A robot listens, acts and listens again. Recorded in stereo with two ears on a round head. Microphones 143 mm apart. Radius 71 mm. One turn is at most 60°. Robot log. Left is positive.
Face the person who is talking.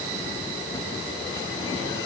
cmd idle
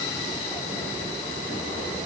cmd idle
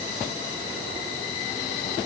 end: I can't make out anyone speaking.